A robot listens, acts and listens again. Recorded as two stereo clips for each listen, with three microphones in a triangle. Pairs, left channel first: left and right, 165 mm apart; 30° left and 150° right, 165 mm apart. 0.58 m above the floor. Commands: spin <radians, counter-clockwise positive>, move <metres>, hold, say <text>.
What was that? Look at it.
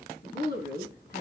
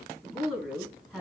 spin 2.18
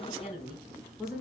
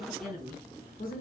say Facing the woman speaking, over 4 m away.